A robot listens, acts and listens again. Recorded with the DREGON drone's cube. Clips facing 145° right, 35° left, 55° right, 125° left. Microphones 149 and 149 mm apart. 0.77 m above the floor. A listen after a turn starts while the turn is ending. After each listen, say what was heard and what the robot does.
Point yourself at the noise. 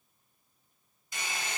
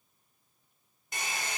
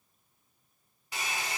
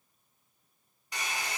The hair dryer: 25° left. Turn 25° left.
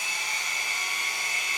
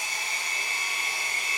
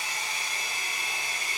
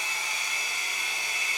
Facing the hair dryer.